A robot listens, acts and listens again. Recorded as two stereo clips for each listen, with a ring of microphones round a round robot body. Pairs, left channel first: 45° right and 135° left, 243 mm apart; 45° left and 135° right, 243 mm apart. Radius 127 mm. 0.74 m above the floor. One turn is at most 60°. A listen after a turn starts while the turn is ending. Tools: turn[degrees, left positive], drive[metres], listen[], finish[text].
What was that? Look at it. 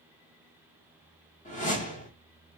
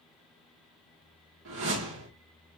Thought: The whoosh: 105° right.
Action: turn[-60]
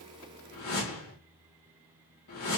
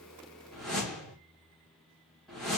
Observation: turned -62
Thought: The whoosh is now 45° right.
Action: turn[-45]
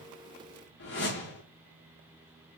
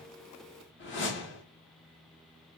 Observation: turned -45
Action: finish[Found it: a whoosh, straight ahead, 2 to 4 m away.]